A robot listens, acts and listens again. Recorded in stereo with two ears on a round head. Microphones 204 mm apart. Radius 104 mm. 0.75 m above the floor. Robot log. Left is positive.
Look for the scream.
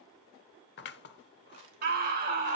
note: The scream: about 40° right or 140° right.
cmd yaw -40
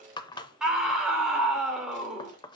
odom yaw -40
end: Facing the scream.